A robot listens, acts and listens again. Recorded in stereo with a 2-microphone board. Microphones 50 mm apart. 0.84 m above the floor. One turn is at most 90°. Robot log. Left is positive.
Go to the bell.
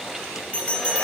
note: The bell: about 20° left or 160° left.
cmd yaw +20
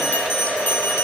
note: So it is at 140° left.
cmd yaw +90
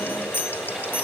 note: The bell is now 45° left.
cmd yaw +45
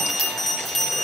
cmd fwd 1.0
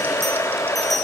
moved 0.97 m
cmd idle
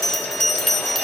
cmd fwd 1.0
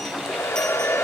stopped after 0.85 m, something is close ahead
cmd idle
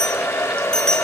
note: The bell is now 15° left.
cmd yaw +15
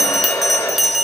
end: I am next to the bell.